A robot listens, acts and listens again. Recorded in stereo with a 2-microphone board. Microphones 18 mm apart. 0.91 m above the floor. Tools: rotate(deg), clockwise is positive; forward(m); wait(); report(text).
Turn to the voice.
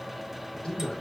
rotate(-60)
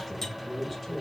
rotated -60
report("Facing the man speaking, 1 to 2 m away.")